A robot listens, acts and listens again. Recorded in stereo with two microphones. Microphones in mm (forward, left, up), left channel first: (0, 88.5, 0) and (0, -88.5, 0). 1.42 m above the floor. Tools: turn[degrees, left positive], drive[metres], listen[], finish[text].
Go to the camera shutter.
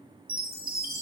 Action: listen[]
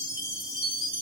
Action: listen[]
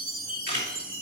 Thought: The camera shutter: about 75° left or 105° left.
Action: turn[75]
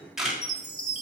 Action: drive[1.0]
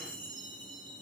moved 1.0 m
Action: listen[]
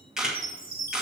Action: drive[1.0]
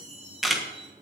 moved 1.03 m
Action: drive[1.0]
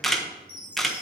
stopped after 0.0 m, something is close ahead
Action: finish[Arrived at the camera shutter, straight ahead.]